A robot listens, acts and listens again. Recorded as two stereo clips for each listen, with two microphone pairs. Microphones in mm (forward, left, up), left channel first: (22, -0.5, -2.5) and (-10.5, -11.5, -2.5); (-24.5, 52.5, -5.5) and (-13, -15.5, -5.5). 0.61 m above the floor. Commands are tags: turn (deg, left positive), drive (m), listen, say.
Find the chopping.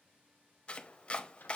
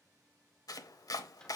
<turn deg="75"/>
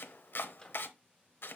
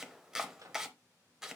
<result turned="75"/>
<say>Found it: chopping, straight ahead, under 1 m away.</say>